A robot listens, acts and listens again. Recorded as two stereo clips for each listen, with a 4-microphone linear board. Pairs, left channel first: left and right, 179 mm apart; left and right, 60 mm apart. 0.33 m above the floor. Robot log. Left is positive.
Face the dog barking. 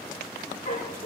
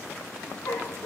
note: The dog barking: about 45° left or 135° left.
cmd yaw +45
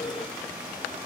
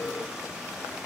cmd idle
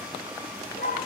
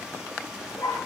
note: So it is at 95° left.
cmd yaw +95
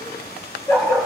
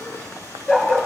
note: The dog barking is now 15° left.
cmd yaw +15
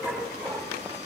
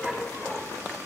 end: Found it: a dog barking, straight ahead.